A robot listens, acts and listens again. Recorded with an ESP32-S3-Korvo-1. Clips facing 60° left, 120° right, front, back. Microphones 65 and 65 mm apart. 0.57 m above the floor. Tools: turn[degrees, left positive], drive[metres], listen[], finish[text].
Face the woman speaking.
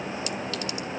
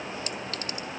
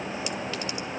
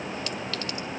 Action: listen[]
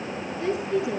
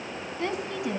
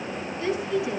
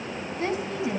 Thought: The woman speaking: 135° right.
Action: turn[-135]
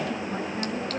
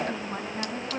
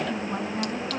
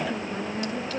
Thought: The woman speaking is now 40° right.
Action: turn[-40]
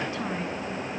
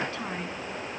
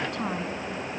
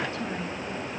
Action: listen[]
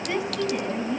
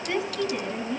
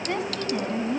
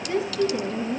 Thought: The woman speaking is now 20° right.
Action: turn[-20]
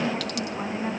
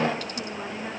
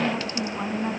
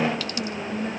Action: finish[Facing the woman speaking.]